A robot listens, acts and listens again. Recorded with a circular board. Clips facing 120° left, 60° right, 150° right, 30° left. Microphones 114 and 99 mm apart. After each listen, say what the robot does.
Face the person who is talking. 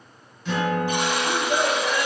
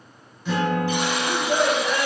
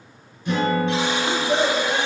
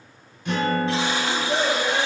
Turn 95° right.
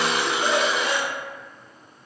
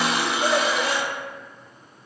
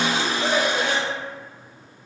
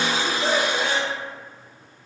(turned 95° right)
Turn 25° right.
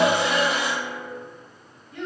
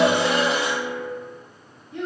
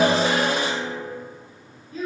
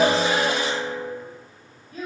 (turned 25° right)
Found it: a child speaking, straight ahead.